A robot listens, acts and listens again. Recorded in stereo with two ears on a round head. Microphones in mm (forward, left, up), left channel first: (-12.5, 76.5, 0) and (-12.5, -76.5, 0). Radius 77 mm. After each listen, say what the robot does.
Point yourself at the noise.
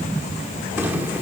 Keep listening.
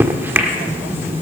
Turn 30° right.
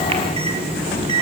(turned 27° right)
Turn 140° right.
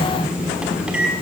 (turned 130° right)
Facing the microwave, 1 to 2 m away.